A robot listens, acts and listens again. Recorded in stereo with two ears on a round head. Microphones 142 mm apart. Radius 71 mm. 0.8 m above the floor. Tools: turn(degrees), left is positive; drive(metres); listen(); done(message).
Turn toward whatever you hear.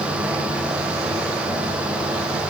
listen()
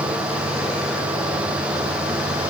listen()
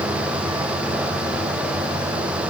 done("I can't make out anything to turn to.")